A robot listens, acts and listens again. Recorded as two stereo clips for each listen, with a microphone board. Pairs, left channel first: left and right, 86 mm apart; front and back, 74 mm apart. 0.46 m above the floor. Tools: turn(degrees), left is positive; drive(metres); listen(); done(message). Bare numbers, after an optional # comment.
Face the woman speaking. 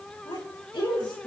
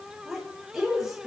# The woman speaking: 95° left.
turn(95)
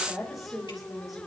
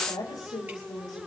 done("Facing the woman speaking.")